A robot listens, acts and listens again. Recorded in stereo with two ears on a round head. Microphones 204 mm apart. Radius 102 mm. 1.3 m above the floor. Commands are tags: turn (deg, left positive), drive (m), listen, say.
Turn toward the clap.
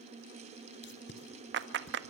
<turn deg="-50"/>
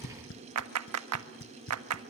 <turn deg="-75"/>
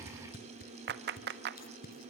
<turn deg="-45"/>
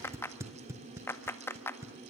<turn deg="10"/>
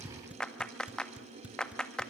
<say>Facing the clap.</say>